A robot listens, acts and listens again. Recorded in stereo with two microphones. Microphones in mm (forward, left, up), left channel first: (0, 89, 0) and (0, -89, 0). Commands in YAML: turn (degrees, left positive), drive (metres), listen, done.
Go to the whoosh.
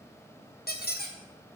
listen: true
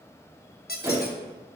turn: -15
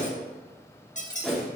drive: 1.0
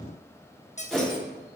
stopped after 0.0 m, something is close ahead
done: "Blocked. The whoosh is further on, straight ahead."